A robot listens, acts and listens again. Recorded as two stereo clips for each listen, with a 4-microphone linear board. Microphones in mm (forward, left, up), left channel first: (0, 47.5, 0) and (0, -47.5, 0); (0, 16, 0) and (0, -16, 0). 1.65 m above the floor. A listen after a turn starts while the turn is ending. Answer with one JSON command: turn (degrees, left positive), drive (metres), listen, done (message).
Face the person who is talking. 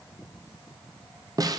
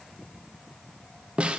{"listen": true}
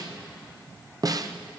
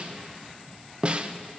{"listen": true}
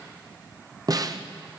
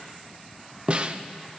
{"done": "I can't make out anyone speaking, only a snare drum."}